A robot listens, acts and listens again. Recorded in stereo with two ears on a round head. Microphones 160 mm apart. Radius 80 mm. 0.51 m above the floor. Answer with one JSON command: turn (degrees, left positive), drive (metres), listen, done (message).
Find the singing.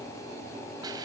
{"listen": true}
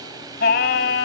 {"turn": 65}
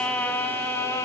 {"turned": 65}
{"turn": 15}
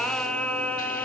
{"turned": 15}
{"turn": 10}
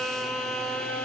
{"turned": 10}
{"done": "Facing the singing."}